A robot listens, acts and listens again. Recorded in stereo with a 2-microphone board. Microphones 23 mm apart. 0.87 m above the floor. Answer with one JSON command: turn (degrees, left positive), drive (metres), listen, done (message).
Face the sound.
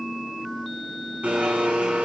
{"turn": -70}
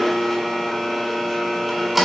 {"done": "Found it: a blender, straight ahead, over 4 m away."}